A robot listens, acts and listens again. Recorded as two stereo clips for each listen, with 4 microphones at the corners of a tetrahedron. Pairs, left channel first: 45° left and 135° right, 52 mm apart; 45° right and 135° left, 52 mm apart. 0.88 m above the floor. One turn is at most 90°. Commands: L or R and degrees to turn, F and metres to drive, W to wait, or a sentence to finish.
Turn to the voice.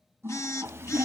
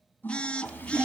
R90
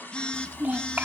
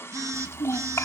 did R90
R70
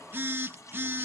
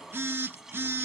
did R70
W
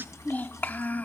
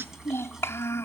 Facing the child speaking, 1 to 2 m away.